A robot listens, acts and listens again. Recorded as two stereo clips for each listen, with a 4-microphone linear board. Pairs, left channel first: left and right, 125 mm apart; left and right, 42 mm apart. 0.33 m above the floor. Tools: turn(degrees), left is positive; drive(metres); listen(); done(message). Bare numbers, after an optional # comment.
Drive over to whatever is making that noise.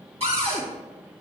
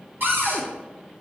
# The cupboard door: about 55° right or 125° right.
turn(-55)
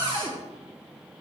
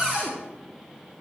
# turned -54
# So it is at 50° right.
turn(-50)
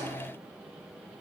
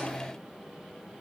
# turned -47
listen()
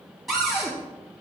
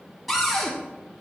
drive(1.0)
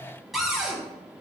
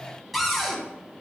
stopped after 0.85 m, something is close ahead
done("I am next to the cupboard door.")